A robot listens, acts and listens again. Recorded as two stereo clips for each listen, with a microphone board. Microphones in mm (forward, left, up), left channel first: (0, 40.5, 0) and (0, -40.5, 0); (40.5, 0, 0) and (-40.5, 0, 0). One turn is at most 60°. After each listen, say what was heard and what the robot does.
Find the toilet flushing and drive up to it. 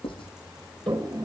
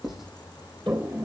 The toilet flushing: 120° right. Turn 60° right.
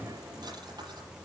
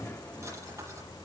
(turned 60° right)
Nothing new. It was at 60° right. Turn 60° right.
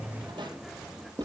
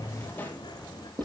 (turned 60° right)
Drive 1.0 m forward.
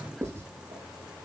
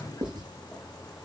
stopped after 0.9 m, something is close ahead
Keep listening.
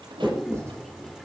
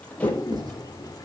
I am next to the toilet flushing.